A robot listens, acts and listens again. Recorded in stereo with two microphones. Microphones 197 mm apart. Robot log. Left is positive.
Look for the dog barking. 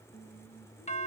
cmd idle
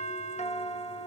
cmd idle
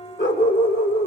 note: The dog barking: about 65° left or 115° left.
cmd yaw +65
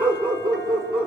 end: Facing the dog barking.